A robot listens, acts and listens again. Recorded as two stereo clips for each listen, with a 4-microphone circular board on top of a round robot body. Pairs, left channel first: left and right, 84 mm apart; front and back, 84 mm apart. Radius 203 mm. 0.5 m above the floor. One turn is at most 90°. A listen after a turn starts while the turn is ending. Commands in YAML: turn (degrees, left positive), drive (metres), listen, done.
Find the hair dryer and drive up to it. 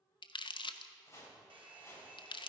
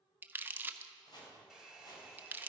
turn: -90
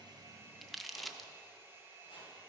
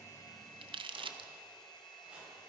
turn: -30
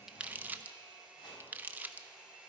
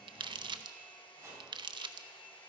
turn: -10
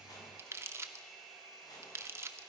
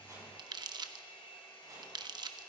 drive: 1.0
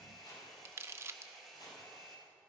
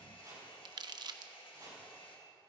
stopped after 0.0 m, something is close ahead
done: "Something is in my way. I am facing the hair dryer but have not reached it."